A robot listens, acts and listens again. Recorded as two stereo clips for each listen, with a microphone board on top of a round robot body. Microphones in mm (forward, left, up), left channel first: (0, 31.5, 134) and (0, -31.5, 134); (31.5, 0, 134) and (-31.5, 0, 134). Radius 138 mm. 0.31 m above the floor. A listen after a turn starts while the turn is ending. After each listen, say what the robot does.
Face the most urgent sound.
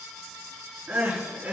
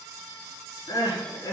Turn 20° right.
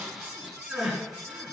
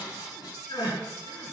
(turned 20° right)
Found it: crying, straight ahead.